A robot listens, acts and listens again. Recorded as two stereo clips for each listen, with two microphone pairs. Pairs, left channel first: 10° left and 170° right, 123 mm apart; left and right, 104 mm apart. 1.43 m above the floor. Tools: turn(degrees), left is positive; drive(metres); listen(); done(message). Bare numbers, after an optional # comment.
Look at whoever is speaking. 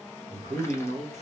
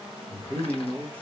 # The man speaking: 160° left.
turn(160)
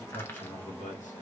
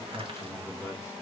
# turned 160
# The man speaking is now 25° left.
turn(25)
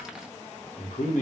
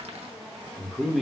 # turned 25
done("Found it: a man speaking, straight ahead.")